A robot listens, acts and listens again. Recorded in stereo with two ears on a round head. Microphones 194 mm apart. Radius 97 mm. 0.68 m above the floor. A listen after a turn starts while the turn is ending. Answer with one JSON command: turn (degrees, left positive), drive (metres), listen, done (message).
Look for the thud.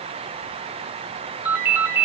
{"listen": true}
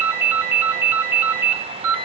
{"listen": true}
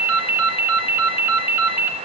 {"done": "I can't make out a thud to turn to."}